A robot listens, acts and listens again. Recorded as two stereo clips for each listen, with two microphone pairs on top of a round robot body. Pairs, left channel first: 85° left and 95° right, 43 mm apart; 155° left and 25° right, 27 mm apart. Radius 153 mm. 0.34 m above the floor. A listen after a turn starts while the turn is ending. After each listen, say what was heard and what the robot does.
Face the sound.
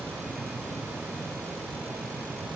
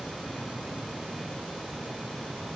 Keep listening.
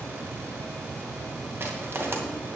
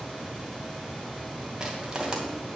The crushing: 85° right. Turn 85° right.
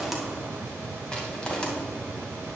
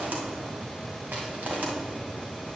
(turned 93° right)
Found it: crushing, straight ahead.